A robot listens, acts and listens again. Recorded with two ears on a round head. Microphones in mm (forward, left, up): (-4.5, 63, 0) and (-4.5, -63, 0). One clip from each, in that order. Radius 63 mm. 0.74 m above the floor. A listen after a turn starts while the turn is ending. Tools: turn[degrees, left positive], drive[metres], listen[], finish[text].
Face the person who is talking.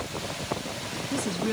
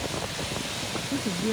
Thought: The woman speaking: about 60° left or 120° left.
Action: turn[60]
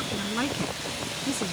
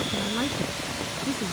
Thought: So it is at 60° left.
Action: turn[60]
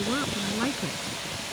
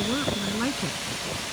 Action: finish[Facing the woman speaking.]